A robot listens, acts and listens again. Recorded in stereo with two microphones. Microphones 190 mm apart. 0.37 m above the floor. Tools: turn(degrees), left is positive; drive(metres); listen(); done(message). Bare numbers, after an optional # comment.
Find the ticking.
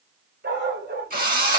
listen()
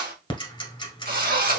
# The ticking: about 25° left or 155° left.
turn(25)
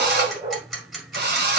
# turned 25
done("Facing the ticking, 1 to 2 m away.")